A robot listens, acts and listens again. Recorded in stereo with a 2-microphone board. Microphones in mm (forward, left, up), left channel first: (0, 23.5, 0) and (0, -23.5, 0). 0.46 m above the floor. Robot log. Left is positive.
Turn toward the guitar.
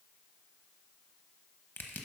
cmd idle
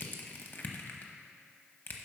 cmd idle
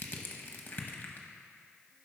end: I can't make out a guitar to turn to.